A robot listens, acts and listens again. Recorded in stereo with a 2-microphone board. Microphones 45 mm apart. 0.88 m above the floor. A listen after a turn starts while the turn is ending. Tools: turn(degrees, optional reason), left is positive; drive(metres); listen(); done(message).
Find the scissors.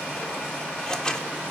turn(degrees=15, reason="The scissors: about 15° left or 165° left.")
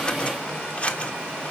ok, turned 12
turn(degrees=150, reason="So it is at 150° left.")
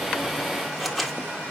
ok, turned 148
done("Found it: scissors, straight ahead, 1 to 2 m away.")